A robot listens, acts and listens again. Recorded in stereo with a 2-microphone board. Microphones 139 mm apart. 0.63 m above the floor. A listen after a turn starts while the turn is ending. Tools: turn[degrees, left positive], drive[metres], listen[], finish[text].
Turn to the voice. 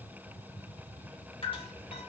Action: listen[]
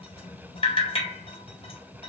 Action: listen[]
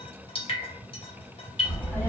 Action: turn[30]
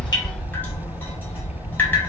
Thought: So it is at 15° right.
Action: turn[-15]
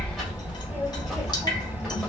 Action: finish[Facing the child speaking, 2 to 4 m away.]